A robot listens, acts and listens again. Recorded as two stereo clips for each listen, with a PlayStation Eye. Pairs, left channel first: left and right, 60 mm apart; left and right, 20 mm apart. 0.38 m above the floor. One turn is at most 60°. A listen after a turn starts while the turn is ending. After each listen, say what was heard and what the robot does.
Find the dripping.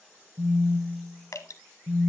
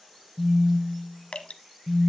Turn 60° left.
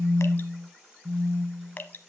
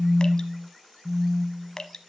So it is at 35° left. Turn 35° left.
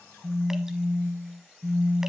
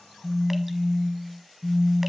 Keep listening.
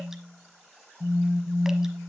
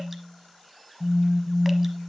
Keep listening.
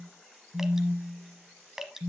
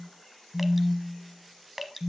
The dripping is now 10° right. Turn 10° right.
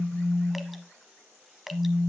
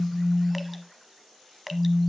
Found it: dripping, straight ahead, under 1 m away.